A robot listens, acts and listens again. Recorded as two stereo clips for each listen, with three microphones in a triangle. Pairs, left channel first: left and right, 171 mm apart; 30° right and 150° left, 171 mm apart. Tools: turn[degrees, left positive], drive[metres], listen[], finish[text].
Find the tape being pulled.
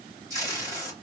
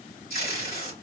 Thought: The tape being pulled: 20° right.
Action: turn[-20]
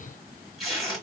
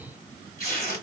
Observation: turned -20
Action: finish[Facing the tape being pulled, 2 to 4 m away.]